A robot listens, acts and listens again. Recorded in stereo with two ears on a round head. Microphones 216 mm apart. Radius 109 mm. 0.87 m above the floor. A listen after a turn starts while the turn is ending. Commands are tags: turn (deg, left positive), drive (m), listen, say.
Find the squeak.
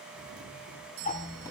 <turn deg="15"/>
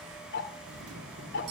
<listen/>
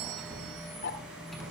<say>Found it: a squeak, straight ahead.</say>